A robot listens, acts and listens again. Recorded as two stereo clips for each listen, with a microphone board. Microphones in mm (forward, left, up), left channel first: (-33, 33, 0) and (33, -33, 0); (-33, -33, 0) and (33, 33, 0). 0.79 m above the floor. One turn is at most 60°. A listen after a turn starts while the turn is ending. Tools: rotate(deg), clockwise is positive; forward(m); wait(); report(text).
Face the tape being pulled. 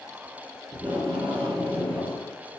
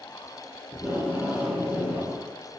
rotate(30)
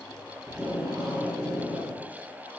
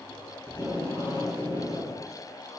rotate(10)
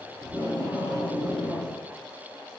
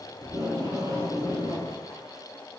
report("Facing the tape being pulled, 2 to 4 m away.")